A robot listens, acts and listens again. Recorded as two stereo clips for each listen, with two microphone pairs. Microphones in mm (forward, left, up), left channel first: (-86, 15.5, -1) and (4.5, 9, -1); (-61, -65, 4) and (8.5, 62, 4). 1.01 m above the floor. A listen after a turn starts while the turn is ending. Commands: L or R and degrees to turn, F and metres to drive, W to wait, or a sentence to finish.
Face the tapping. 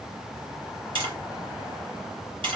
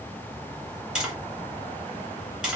R25
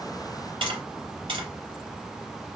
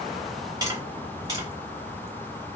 Facing the tapping, 2 to 4 m away.